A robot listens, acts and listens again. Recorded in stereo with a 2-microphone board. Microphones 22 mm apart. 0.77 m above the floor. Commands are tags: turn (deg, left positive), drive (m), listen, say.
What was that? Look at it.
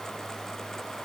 <listen/>
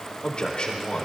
<turn deg="50"/>
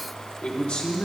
<turn deg="70"/>
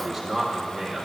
<say>Found it: a man speaking, straight ahead, 2 to 4 m away.</say>